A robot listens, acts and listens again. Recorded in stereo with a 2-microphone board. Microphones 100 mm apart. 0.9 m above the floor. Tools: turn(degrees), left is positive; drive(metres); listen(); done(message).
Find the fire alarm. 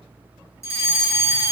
turn(degrees=30)
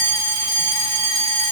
done("Facing the fire alarm.")